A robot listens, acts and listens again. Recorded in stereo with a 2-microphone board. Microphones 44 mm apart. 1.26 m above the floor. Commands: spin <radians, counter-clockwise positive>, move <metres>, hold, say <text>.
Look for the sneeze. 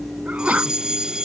spin -0.61
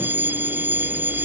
hold
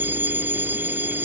say I heard a sneeze, but can't make it out now. It was about straight ahead or 110° right.